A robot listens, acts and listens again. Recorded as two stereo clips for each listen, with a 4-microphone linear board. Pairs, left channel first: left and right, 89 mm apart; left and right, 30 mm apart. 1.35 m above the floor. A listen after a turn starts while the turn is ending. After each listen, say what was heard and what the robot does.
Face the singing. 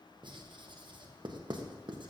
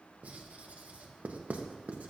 Keep listening.
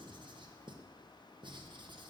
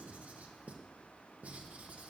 Keep listening.
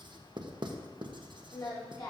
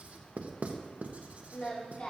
The singing: about 55° left or 125° left. Turn 55° left.
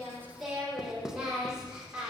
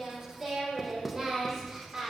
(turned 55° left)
So it is at 10° right. Turn 10° right.
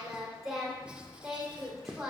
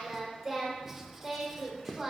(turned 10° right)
Facing the singing.